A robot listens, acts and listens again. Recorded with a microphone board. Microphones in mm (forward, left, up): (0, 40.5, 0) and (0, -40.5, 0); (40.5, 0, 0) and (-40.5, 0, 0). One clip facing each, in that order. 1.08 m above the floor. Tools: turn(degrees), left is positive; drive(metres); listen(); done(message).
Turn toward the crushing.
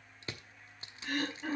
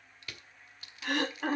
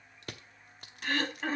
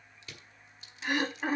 turn(degrees=30)
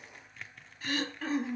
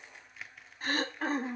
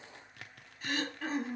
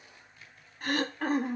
done("Facing the crushing, 1 to 2 m away.")